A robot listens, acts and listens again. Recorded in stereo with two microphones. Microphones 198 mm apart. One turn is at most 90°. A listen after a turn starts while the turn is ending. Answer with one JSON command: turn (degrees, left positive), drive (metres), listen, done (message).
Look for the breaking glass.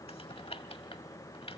{"listen": true}
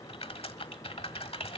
{"listen": true}
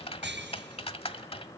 {"turn": -65}
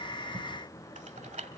{"listen": true}
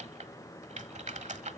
{"done": "I heard breaking glass, but can't make it out now. It was about straight ahead or 50° right."}